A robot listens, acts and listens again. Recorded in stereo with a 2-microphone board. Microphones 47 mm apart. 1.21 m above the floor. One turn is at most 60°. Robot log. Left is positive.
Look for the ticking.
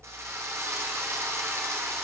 cmd idle
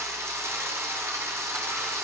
cmd idle
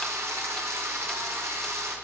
end: I can't make out ticking to turn to.